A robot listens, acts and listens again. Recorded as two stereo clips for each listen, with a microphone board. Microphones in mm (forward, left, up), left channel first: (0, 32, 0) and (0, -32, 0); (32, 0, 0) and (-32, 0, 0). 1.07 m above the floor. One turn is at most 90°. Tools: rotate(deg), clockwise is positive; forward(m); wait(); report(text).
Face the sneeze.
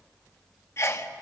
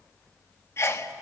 rotate(-45)
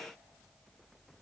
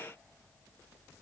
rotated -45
report("Facing where the sneeze came from. I can't hear it now.")